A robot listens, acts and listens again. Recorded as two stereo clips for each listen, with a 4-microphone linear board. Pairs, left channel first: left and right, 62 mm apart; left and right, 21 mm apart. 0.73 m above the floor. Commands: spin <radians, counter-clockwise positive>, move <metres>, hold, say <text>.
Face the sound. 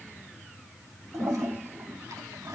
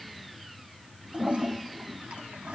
spin -1.31
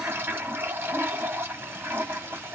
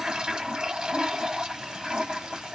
spin -0.52
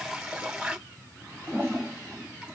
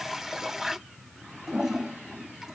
spin -0.17
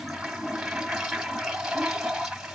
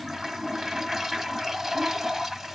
say Facing the toilet flushing.